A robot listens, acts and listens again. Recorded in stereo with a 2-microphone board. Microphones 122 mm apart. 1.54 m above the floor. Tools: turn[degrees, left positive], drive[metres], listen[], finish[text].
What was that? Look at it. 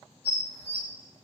Thought: The dishes clattering: about 20° right or 160° right.
Action: turn[-20]
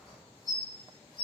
Thought: So it is at 140° right.
Action: turn[-140]
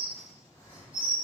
Thought: The dishes clattering is now 10° right.
Action: turn[-10]
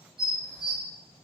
Action: finish[Found it: dishes clattering, straight ahead, 2 to 4 m away.]